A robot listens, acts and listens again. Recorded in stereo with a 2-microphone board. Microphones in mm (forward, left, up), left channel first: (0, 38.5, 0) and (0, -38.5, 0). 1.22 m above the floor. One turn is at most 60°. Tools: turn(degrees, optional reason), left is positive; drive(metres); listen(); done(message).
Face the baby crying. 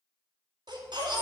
turn(degrees=-60)
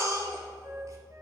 turn(degrees=-40, reason="So it is at 40° right.")
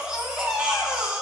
turn(degrees=-10, reason="The baby crying is now 10° right.")
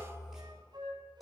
done("Found it: a baby crying, straight ahead, 2 to 4 m away.")